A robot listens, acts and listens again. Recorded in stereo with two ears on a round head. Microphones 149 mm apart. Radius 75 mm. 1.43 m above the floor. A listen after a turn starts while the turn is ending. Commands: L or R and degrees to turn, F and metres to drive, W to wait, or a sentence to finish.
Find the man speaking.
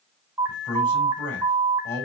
L20
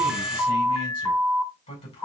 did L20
L140
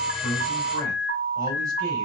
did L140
W
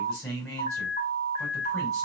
Facing the man speaking.